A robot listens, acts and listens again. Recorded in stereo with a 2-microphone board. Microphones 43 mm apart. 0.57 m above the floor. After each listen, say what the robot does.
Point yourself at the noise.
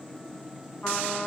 Keep listening.
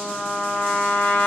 Turn 50° left.
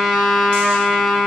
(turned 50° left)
Facing the trumpet.